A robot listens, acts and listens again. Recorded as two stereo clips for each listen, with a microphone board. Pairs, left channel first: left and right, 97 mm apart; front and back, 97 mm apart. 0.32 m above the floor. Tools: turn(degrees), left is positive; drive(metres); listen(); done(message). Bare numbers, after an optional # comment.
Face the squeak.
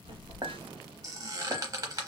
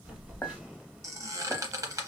# The squeak: 130° right.
turn(-130)
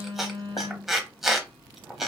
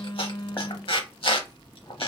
done("Found it: a squeak, straight ahead, under 1 m away.")